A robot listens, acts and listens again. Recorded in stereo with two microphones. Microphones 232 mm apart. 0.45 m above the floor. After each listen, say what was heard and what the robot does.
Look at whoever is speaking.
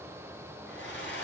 Keep listening.
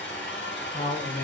The man speaking: about 40° left or 140° left. Turn 40° left.
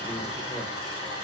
Keep listening.
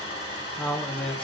Facing the man speaking.